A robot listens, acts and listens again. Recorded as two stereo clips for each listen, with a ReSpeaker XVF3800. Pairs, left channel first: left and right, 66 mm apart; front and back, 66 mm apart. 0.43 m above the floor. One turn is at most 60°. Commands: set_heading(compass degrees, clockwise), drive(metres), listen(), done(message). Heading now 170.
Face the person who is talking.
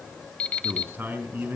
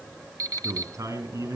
set_heading(230)
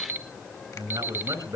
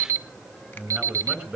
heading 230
set_heading(290)
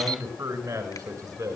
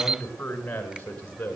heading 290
set_heading(350)
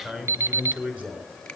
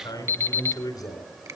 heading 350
set_heading(5)
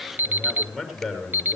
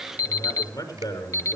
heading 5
done("Facing the man speaking.")